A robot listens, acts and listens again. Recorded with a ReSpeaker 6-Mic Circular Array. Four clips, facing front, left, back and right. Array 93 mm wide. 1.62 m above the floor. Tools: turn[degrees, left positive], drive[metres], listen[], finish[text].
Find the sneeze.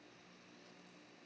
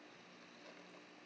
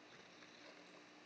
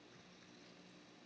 Action: listen[]
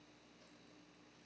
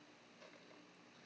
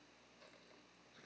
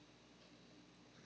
Action: listen[]
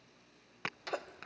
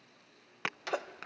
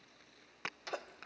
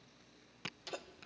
Thought: The sneeze: 80° left.
Action: turn[80]
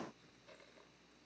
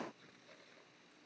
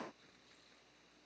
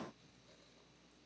Action: finish[I heard a sneeze from this way, but can't make it out now.]